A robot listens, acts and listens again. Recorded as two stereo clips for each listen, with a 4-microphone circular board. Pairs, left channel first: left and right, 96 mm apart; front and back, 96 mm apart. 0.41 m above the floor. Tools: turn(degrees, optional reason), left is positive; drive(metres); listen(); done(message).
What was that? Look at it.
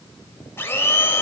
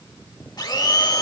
turn(degrees=30, reason="The blender: 30° left.")
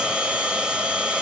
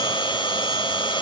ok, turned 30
turn(degrees=-10, reason="The blender is now 10° right.")
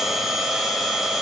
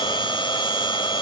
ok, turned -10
done("Found it: a blender, straight ahead, 1 to 2 m away.")